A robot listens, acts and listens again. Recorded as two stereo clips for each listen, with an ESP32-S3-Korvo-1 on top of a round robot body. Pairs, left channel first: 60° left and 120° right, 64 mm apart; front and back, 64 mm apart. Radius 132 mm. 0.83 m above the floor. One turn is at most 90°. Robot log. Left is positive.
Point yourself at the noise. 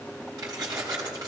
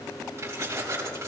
note: The keys jangling: 130° right.
cmd yaw -90
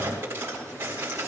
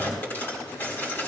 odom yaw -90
note: The keys jangling is now 60° right.
cmd yaw -60
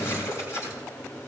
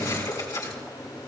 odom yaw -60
note: The keys jangling is now 20° left.
cmd yaw +20
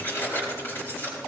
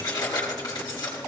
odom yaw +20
end: Found it: keys jangling, straight ahead, over 4 m away.